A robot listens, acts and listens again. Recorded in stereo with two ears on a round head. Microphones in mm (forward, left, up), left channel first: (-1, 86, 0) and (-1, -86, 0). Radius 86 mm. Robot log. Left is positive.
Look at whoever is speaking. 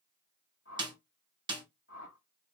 cmd idle
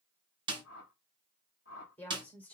cmd yaw +30
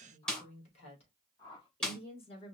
note: So it is at 150° left.
cmd yaw +150
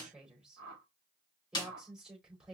end: Found it: a woman speaking, straight ahead.